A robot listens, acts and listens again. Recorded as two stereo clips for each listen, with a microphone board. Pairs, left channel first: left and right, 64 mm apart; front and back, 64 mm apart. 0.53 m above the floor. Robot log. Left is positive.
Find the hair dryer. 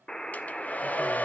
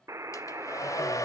note: The hair dryer: 25° left.
cmd yaw +25
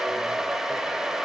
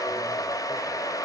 end: Found it: a hair dryer, straight ahead.